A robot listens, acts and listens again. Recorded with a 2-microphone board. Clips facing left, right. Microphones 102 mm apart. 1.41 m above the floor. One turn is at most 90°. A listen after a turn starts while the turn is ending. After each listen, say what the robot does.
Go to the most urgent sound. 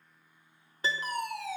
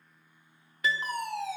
Turn 25° right.
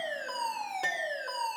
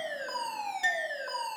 Drive 1.0 m forward.
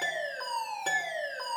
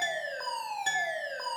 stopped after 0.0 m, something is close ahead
Blocked. The fire alarm is further on, straight ahead.